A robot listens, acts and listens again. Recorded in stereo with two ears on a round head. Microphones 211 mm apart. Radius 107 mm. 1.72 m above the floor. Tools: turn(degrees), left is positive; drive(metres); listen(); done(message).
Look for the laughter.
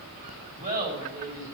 turn(degrees=-40)
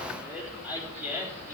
turn(degrees=-10)
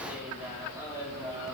turn(degrees=-15)
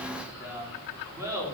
turn(degrees=-15)
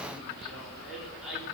done("Found it: laughter, straight ahead, over 4 m away.")